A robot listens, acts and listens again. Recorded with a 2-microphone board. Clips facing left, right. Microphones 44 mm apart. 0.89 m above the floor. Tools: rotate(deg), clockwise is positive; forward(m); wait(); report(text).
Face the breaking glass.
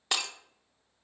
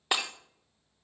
rotate(15)
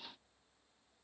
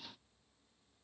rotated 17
wait()
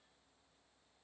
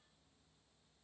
report("I heard breaking glass, but can't make it out now. It was about straight ahead or 145° right.")